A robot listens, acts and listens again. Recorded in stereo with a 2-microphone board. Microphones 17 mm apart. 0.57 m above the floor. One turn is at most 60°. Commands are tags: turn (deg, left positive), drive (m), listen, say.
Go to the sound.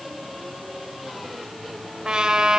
<turn deg="-60"/>
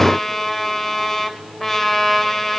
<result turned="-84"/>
<drive m="1.0"/>
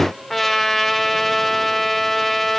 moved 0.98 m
<turn deg="10"/>
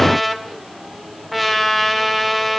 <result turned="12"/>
<drive m="1.0"/>
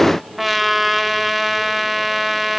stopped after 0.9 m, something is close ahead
<turn deg="-15"/>
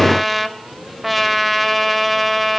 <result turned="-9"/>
<say>I am next to the trumpet.</say>